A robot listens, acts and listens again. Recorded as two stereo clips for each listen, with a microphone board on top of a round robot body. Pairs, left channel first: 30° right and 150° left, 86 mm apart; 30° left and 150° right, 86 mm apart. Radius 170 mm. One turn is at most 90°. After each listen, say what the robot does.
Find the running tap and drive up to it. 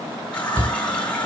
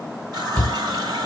Turn 90° right.
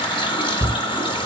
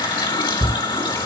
Drive 1.0 m forward.
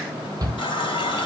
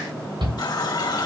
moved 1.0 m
Turn 10° right.
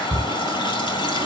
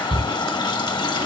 Drive 1.0 m forward.
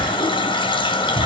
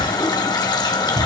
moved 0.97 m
Turn 10° right.
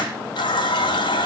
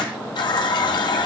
Drive 1.0 m forward.
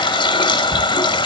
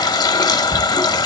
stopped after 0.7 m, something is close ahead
Turn 10° right.
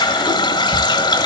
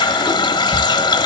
Arrived at the running tap, straight ahead.